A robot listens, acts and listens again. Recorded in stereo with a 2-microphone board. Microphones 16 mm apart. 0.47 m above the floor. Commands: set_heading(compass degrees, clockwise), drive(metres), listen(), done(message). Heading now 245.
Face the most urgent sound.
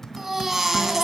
set_heading(270)
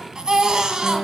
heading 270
set_heading(40)
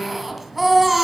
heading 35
done("Found it: a baby crying, straight ahead.")